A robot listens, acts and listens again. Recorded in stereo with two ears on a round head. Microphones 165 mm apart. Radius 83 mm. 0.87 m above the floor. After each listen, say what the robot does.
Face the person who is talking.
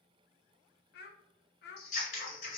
Turn 60° left.
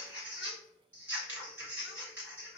Keep listening.
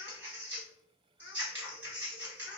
Keep listening.
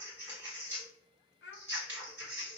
Turn 55° left.
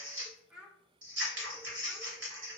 Facing the child speaking.